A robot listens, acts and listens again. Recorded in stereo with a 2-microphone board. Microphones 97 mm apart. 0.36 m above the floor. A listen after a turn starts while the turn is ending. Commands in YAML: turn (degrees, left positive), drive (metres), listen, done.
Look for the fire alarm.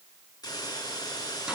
listen: true
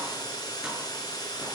listen: true
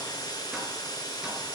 done: "I can't make out a fire alarm to turn to."